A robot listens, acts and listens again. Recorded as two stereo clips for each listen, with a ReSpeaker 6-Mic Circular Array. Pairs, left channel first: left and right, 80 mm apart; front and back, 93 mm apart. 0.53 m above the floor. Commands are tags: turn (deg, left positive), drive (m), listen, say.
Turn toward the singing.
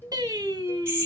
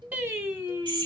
<turn deg="-120"/>
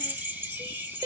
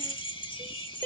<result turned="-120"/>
<turn deg="-60"/>
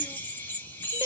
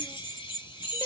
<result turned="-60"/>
<turn deg="-40"/>
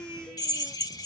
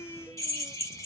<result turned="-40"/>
<turn deg="-20"/>
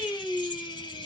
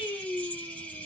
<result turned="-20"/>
<say>Facing the singing.</say>